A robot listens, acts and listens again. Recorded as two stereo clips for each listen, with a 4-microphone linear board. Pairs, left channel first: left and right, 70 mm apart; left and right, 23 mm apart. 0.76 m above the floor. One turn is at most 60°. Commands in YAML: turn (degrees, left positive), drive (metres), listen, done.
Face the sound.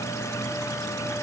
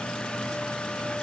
listen: true
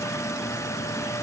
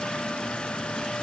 listen: true
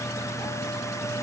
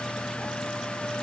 done: "I can't make out anything to turn to."